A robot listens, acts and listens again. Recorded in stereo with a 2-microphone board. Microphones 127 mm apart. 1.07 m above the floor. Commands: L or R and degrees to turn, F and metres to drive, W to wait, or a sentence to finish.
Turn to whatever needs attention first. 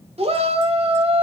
R55
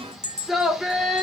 Found it: a shout, straight ahead.